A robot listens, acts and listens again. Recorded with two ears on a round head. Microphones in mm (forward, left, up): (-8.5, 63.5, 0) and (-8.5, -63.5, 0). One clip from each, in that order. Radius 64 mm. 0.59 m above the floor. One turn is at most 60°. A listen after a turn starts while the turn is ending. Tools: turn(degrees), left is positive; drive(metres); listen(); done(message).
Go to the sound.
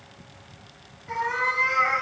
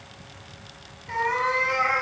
turn(degrees=55)
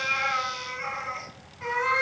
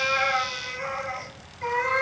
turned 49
turn(degrees=60)
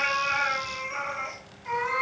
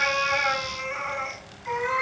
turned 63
turn(degrees=15)
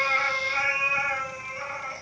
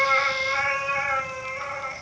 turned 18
drive(metres=1.0)
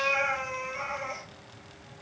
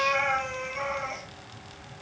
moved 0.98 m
turn(degrees=-10)
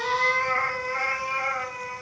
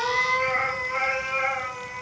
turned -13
drive(metres=1.0)
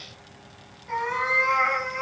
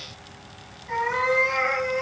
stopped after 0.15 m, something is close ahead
done("I am next to the cat meowing.")